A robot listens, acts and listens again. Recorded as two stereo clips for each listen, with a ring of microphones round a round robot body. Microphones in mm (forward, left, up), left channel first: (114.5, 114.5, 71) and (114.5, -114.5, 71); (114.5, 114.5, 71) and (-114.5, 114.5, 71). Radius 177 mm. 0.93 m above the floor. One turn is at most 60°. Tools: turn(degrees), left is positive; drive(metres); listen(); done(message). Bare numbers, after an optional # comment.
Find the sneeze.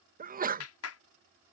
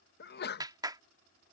# The sneeze: 40° right.
turn(-40)
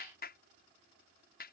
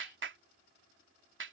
done("Facing where the sneeze came from. I can't hear it now.")